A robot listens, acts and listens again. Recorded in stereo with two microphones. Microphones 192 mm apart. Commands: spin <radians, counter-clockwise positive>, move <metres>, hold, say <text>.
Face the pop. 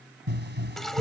spin -1.13
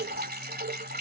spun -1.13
hold
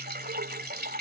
say I heard a pop, but can't make it out now. It was about straight ahead or 50° right.